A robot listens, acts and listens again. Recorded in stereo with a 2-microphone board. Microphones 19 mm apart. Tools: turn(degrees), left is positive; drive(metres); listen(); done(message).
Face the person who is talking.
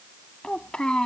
turn(degrees=50)
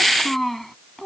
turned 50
turn(degrees=10)
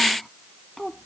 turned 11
turn(degrees=10)
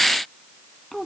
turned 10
done("Found it: a child speaking, straight ahead.")